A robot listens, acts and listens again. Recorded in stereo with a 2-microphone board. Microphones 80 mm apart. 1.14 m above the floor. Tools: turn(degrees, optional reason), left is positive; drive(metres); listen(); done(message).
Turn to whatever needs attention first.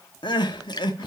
turn(degrees=75, reason="The crying: about 75° left or 105° left.")
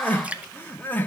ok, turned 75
turn(degrees=25, reason="So it is at 25° left.")
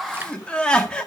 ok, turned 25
turn(degrees=10, reason="The crying is now 10° left.")
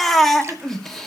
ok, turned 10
done("Facing the crying.")